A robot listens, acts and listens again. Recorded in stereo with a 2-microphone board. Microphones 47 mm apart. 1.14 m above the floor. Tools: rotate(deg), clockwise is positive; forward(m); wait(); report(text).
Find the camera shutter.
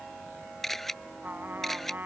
rotate(-30)
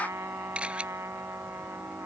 rotate(25)
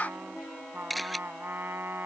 report("Facing the camera shutter.")